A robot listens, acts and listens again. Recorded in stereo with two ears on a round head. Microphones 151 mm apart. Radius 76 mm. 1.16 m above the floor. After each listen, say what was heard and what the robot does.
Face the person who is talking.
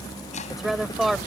Turn 30° left.
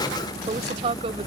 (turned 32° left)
So it is at 35° right. Turn 35° right.
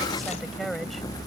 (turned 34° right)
Keep listening.
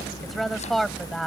Found it: a woman speaking, straight ahead.